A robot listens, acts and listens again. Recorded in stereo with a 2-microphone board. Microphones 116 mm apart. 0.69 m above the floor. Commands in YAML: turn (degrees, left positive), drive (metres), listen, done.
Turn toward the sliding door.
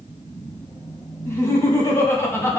listen: true
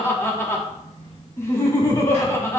listen: true
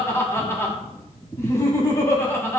done: "I can't make out a sliding door to turn to."